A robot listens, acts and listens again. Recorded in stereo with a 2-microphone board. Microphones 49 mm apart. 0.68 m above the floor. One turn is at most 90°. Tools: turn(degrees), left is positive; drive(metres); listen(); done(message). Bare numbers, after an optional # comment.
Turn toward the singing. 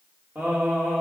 # The singing: about 55° right or 125° right.
turn(-55)
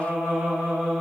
# So it is at 30° right.
turn(-30)
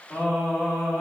# The singing is now 25° left.
turn(25)
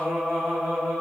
# The singing is now 10° left.
turn(10)
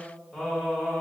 done("Found it: singing, straight ahead, 2 to 4 m away.")